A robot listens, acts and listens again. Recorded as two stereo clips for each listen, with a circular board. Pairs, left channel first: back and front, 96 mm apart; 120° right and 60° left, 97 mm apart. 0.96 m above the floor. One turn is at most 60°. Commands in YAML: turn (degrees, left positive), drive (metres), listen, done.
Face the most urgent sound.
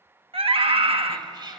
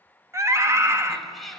done: "Facing the scream."